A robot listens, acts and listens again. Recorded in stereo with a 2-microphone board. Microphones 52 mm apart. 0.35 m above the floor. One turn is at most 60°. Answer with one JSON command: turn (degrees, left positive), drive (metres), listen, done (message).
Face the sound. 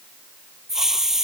{"turn": -30}
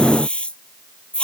{"turn": 20}
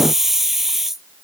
{"done": "Found it: a hiss, straight ahead."}